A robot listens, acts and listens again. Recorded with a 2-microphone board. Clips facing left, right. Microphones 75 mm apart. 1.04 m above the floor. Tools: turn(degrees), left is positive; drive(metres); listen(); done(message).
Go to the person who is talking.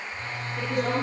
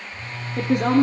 turn(degrees=-70)
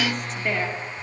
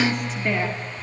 drive(metres=1.0)
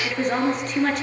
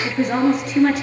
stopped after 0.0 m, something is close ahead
done("Blocked. The woman speaking is further on, straight ahead.")